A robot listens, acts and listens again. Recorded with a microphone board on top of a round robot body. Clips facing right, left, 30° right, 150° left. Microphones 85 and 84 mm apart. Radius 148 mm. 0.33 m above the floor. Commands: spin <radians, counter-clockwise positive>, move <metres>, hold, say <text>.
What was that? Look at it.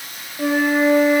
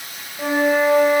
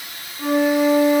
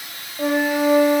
spin 3.05
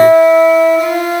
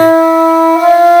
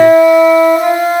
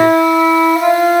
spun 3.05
spin 0.70
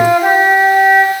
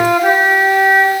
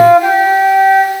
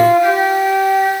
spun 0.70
spin -0.44
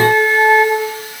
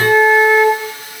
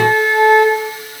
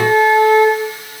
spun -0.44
say Found it: a flute, straight ahead.